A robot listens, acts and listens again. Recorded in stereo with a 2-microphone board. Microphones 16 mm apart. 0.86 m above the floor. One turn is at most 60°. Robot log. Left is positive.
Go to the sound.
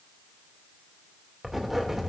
cmd yaw -30
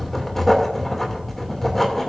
note: So it is at 20° left.
cmd yaw +20
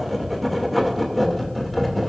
cmd fwd 1.0
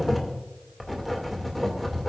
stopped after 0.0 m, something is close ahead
note: The writing is now 10° left.
cmd yaw +10
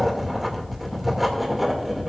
end: Blocked. The writing is further on, straight ahead.